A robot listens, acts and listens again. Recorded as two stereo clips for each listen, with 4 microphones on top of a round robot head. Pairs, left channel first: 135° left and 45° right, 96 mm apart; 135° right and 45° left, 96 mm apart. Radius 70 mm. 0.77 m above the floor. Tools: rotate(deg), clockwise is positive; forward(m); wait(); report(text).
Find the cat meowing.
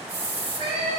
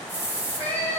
rotate(65)
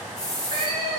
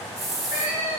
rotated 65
report("Found it: a cat meowing, straight ahead.")